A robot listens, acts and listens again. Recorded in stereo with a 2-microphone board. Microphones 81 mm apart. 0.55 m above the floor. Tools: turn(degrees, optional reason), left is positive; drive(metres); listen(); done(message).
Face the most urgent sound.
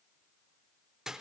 listen()
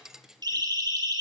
turn(degrees=-65, reason="The siren: about 65° right or 115° right.")
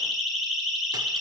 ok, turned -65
done("Found it: a siren, straight ahead, 2 to 4 m away.")